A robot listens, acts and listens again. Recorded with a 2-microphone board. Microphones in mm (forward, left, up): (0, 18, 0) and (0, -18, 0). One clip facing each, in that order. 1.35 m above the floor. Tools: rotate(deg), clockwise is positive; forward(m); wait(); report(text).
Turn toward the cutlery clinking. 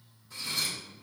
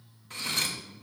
rotate(60)
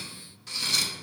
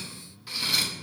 rotate(15)
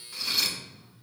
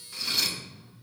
report("Facing the cutlery clinking, 1 to 2 m away.")